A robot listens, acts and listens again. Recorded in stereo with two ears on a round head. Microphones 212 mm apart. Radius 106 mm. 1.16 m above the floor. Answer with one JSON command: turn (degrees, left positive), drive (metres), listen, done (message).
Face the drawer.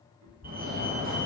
{"listen": true}
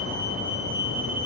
{"listen": true}
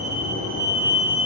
{"done": "I can't make out a drawer, only a fire alarm and a cat meowing."}